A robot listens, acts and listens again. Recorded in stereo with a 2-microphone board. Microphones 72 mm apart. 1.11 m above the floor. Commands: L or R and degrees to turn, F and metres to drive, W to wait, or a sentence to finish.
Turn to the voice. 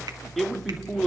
L30
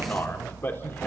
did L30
L150
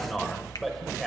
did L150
Found it: a man speaking, straight ahead.